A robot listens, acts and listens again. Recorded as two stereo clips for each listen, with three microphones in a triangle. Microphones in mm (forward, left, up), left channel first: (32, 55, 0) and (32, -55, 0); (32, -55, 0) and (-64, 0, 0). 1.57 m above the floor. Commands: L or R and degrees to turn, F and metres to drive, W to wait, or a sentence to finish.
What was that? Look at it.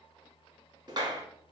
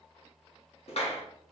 R40
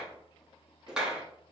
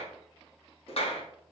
R10
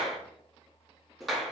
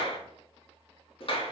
Facing the clap.